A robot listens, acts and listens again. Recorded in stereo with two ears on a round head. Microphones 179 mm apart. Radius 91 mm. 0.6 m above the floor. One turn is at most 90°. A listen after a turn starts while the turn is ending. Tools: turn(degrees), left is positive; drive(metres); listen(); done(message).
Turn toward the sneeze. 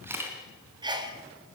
turn(degrees=-25)
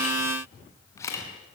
listen()
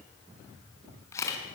done("I heard a sneeze, but can't make it out now. It was about straight ahead or 130° right.")